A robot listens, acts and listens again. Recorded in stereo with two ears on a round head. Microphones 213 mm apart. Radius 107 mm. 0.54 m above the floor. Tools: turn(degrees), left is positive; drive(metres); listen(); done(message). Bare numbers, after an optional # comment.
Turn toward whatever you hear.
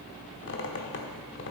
# The squeak: about 50° left or 130° left.
turn(50)
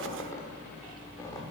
# So it is at 15° left.
turn(15)
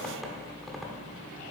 done("Facing the squeak.")